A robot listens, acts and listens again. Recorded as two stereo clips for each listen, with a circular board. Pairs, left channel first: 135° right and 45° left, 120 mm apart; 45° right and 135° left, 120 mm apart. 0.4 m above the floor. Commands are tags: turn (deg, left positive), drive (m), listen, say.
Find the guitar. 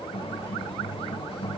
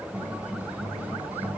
<turn deg="-150"/>
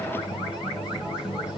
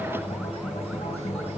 <turn deg="-35"/>
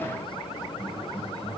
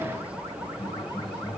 <say>Facing the guitar, 2 to 4 m away.</say>